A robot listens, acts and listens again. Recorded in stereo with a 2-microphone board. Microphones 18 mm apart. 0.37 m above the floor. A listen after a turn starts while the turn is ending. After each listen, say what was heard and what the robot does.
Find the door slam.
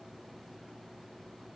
Keep listening.
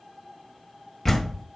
Turn 30° left.
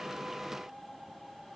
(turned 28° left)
Keep listening.
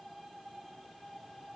I heard a door slam, but can't make it out now. It was about 25° right or 150° left.